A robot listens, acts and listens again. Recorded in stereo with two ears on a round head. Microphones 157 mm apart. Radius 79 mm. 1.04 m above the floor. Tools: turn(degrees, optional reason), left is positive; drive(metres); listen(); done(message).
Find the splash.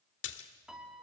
turn(degrees=75, reason="The splash: about 75° left or 105° left.")
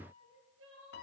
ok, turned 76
listen()
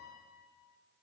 done("I heard a splash, but can't make it out now. It was about 5° right or 30° left.")